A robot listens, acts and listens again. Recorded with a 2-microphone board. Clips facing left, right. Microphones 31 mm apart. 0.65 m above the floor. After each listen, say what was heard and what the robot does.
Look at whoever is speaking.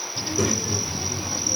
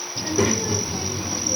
The child speaking: about 35° right or 145° right. Turn 35° right.
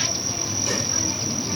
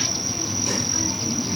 Facing the child speaking.